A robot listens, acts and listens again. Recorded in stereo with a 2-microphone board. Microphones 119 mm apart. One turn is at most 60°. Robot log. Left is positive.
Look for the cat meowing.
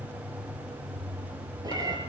note: The cat meowing: about 30° right or 150° right.
cmd yaw -30
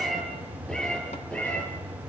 note: So it is at 10° left.
cmd yaw +10
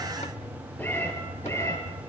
note: The cat meowing is now 20° left.
cmd yaw +20
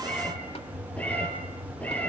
note: The cat meowing is now 10° left.
cmd yaw +10
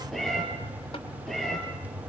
end: Facing the cat meowing, over 4 m away.